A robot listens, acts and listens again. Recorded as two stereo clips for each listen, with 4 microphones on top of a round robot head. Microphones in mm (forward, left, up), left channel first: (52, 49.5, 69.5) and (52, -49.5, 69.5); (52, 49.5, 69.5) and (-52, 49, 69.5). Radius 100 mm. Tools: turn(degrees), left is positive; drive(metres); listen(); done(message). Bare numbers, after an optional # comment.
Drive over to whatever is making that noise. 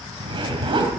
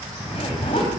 # The zipper: 55° right.
turn(-55)
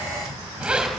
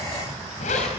# The zipper is now 10° right.
turn(-10)
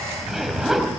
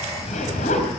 drive(1.0)
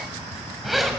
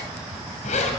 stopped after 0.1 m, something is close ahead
done("Blocked. The zipper is further on, straight ahead.")